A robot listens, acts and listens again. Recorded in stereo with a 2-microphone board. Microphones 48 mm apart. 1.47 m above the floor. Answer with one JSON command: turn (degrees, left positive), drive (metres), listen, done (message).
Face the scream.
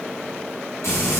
{"listen": true}
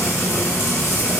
{"listen": true}
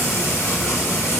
{"done": "I can't make out a scream, only frying."}